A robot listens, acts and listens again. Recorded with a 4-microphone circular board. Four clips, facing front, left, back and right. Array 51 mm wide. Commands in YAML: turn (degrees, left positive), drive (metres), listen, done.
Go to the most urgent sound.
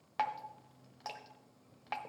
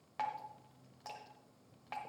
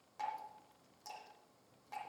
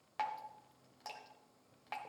listen: true
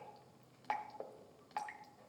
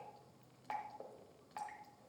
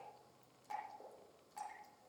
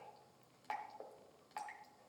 listen: true
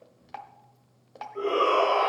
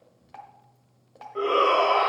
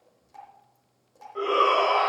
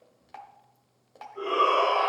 turn: 120
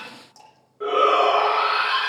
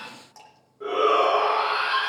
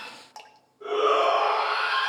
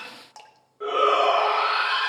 turn: -30
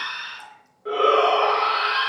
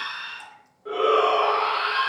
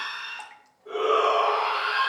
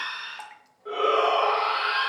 drive: 1.0
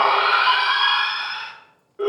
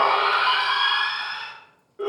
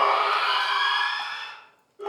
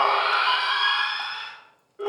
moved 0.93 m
drive: 1.0
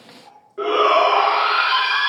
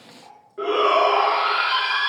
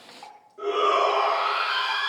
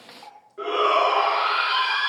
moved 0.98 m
turn: 10
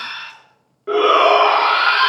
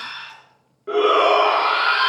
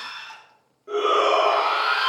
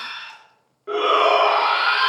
drive: 1.0
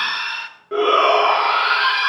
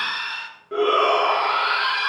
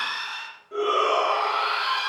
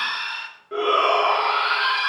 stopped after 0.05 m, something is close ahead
done: "Arrived at the shout, straight ahead."